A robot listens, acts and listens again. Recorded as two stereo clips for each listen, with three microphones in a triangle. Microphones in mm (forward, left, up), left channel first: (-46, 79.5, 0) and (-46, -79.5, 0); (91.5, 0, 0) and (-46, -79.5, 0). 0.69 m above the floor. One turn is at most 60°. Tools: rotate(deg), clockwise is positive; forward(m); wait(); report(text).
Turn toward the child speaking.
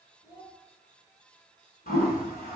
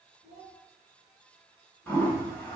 rotate(-60)
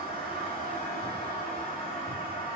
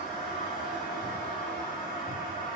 rotate(-60)
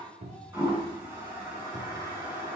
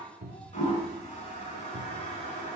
rotate(-25)
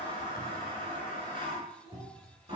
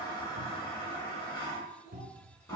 report("I heard a child speaking from this way, but can't make it out now.")